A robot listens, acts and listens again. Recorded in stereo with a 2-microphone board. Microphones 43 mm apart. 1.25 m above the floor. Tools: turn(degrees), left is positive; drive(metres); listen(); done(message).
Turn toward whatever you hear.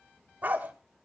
turn(degrees=-35)
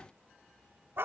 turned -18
turn(degrees=-125)
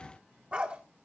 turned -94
turn(degrees=-30)
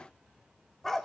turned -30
done("Found it: a dog barking, straight ahead.")